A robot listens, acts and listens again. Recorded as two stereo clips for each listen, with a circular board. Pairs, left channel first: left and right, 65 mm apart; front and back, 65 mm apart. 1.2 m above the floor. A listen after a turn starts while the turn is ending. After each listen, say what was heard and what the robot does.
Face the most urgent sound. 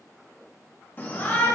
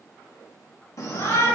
The shout: 35° left. Turn 35° left.
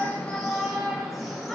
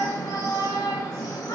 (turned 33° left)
Facing the shout, 2 to 4 m away.